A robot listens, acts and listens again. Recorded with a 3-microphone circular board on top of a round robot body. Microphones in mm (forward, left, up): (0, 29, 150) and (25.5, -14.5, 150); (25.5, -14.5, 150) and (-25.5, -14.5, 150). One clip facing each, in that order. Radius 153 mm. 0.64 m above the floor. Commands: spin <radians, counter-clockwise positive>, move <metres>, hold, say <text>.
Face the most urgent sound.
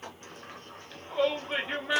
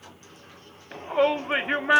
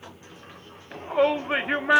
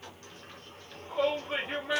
spin -0.44
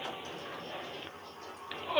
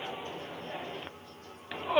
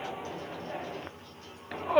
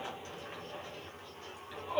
spin 0.17
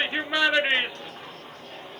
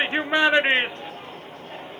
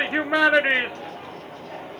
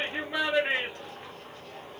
say Found it: a shout, straight ahead.